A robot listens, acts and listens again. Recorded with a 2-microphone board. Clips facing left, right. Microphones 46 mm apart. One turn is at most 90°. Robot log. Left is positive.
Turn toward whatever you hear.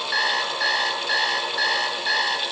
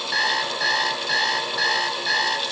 cmd yaw +30
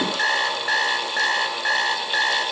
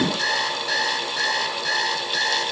note: So it is at 145° left.
cmd yaw +90
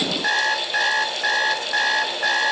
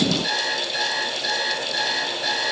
note: The alarm clock is now 50° left.
cmd yaw +50
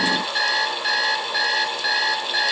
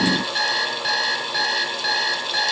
end: Facing the alarm clock, 1 to 2 m away.